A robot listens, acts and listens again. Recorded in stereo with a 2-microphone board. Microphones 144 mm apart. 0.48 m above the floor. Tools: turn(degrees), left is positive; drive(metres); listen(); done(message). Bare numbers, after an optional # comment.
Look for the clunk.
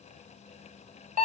listen()
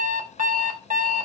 listen()
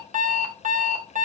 done("I can't make out a clunk, only an alarm clock.")